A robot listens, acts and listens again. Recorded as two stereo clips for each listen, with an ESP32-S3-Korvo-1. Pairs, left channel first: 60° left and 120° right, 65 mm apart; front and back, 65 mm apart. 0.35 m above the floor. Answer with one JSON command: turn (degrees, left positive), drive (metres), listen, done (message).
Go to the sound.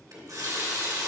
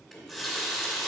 {"turn": -85}
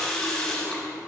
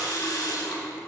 {"turn": -15}
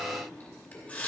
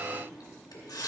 {"drive": 1.0}
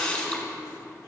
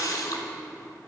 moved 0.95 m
{"turn": -10}
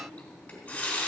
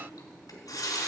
{"drive": 1.0}
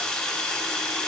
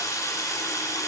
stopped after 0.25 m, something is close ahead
{"turn": -10}
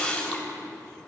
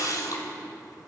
{"done": "Arrived at the running tap, straight ahead."}